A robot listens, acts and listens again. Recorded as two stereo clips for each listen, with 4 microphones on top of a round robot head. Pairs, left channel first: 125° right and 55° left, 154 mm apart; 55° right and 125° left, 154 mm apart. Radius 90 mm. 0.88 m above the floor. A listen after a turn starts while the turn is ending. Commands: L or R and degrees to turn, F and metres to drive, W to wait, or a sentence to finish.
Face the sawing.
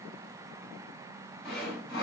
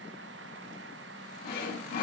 R35
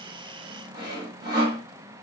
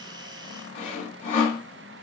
R10
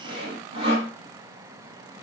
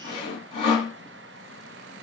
Facing the sawing.